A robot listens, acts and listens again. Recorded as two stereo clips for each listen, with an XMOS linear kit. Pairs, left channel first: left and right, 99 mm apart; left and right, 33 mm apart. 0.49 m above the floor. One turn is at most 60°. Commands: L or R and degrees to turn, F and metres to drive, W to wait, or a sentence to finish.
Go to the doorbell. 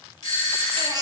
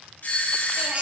L60
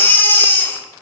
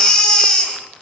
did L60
W
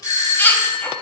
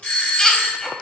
L40
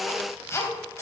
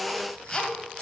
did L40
W
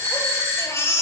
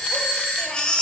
L35
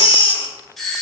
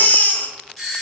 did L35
F1.0
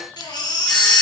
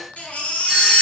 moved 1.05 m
W
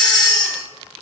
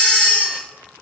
W
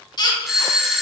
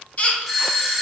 F1.0
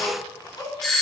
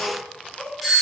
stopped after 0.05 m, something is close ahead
Arrived at the doorbell, straight ahead.